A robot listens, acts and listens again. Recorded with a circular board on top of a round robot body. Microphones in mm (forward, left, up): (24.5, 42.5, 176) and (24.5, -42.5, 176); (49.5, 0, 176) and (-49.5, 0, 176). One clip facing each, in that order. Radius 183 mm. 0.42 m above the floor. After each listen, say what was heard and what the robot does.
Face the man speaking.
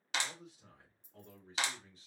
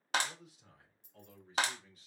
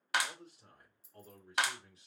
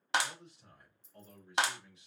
The man speaking: 40° left. Turn 40° left.
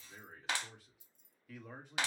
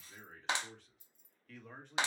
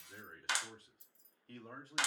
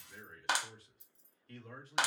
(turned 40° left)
The man speaking is now 15° left. Turn 15° left.
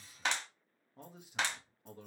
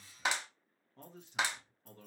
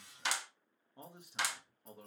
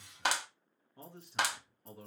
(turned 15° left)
The man speaking is now 100° left. Turn 100° left.
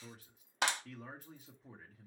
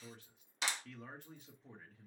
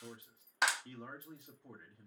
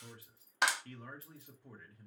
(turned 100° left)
The man speaking is now 15° left. Turn 15° left.
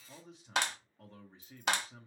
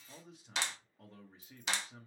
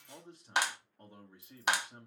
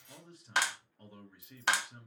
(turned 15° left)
Found it: a man speaking, straight ahead, 1 to 2 m away.